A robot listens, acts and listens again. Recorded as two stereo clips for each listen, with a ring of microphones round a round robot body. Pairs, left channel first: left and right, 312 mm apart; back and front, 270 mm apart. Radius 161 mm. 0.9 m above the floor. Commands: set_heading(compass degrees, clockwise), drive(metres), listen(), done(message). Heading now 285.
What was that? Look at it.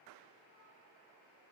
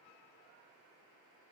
listen()
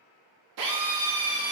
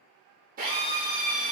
set_heading(350)
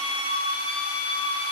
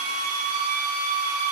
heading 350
set_heading(335)
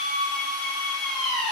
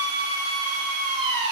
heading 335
done("Found it: a drill, straight ahead, under 1 m away.")